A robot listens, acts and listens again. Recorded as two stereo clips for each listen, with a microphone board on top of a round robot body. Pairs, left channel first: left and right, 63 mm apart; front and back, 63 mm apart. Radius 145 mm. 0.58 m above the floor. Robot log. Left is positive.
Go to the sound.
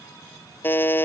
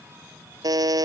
note: The buzzer: 150° left.
cmd yaw +150
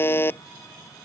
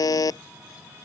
note: The buzzer is now 30° left.
cmd yaw +30
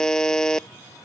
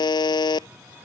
cmd fwd 1.0
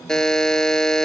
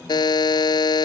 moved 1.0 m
note: The buzzer is now 10° left.
cmd yaw +10
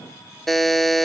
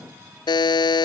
cmd fwd 1.0
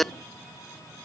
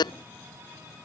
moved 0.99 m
cmd fwd 1.0
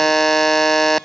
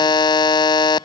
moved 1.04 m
cmd fwd 1.0
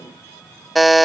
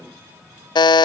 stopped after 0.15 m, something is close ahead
end: Arrived at the buzzer, straight ahead.